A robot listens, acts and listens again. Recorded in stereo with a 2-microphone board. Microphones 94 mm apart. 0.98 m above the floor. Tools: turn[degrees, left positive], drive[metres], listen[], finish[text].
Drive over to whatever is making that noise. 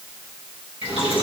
Action: turn[90]
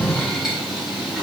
Action: drive[1.0]
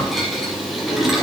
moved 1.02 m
Action: drive[1.0]
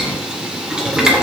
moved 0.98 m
Action: drive[1.0]
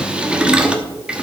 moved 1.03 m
Thought: The boiling is now 10° right.
Action: turn[-10]
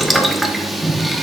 Action: drive[1.0]
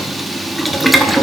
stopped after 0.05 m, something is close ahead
Action: finish[I am next to the boiling.]